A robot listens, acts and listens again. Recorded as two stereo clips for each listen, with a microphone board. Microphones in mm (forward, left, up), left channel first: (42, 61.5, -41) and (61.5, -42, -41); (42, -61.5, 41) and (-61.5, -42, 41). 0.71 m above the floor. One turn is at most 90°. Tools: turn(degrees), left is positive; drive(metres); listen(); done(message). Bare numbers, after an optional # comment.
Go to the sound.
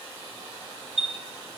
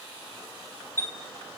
# The chime: 80° right.
turn(-80)
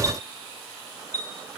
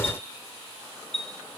# The chime is now 25° right.
turn(-25)
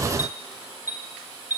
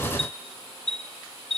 # The chime is now 10° right.
turn(-10)
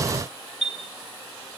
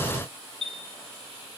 drive(1.0)
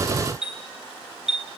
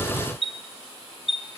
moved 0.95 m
drive(1.0)
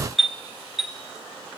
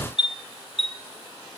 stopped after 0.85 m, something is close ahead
done("Arrived at the chime, straight ahead.")